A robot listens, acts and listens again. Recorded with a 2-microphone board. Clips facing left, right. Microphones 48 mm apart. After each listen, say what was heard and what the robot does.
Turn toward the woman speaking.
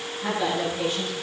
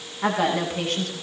The woman speaking: about 65° right or 115° right. Turn 65° right.
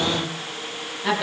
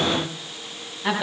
Found it: a woman speaking, straight ahead, over 4 m away.